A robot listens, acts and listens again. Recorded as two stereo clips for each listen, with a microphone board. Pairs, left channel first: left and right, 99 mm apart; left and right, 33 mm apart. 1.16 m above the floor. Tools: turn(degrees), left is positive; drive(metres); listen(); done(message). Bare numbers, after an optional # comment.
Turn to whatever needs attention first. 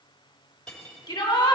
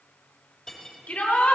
# The shout: about 55° left or 125° left.
turn(55)
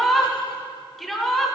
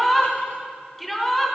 done("Facing the shout.")